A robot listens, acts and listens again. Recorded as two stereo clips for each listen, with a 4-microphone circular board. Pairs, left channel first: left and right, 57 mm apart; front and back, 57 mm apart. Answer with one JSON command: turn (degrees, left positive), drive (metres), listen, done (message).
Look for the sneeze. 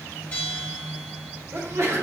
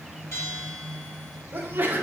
{"turn": -125}
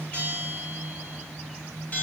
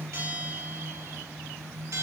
{"done": "I heard a sneeze from this way, but can't make it out now."}